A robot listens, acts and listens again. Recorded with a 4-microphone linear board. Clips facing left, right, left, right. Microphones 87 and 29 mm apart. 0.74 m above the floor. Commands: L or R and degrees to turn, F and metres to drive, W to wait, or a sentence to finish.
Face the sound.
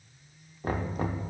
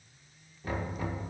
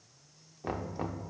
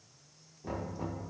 L45
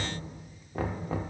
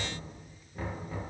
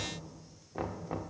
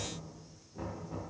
L85
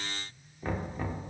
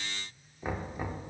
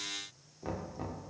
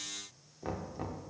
R10
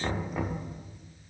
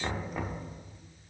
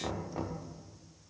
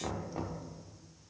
Found it: knocking, straight ahead, 1 to 2 m away.